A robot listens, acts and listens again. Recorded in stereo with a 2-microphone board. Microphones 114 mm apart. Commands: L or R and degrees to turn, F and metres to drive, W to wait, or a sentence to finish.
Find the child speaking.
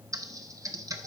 W
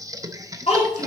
L90
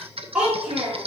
R10
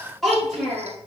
Found it: a child speaking, straight ahead.